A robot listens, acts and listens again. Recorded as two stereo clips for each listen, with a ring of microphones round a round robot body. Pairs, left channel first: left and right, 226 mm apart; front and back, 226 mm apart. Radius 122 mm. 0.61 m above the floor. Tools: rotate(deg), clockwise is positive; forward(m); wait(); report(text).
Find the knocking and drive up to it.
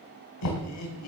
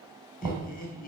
rotate(-105)
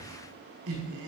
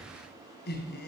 wait()
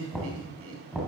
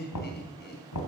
forward(1.0)
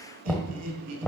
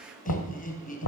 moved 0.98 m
forward(1.0)
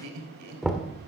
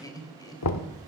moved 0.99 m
forward(1.0)
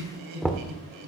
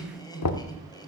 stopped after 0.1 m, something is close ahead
report("I am next to the knocking.")